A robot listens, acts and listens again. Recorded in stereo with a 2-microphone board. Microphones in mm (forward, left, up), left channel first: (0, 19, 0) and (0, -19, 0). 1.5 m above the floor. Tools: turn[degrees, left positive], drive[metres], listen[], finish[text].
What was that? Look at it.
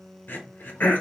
Thought: The throat clearing: about 60° left or 120° left.
Action: turn[60]
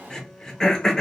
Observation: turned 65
Thought: So it is at 20° left.
Action: turn[20]
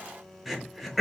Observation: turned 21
Action: finish[Facing the throat clearing.]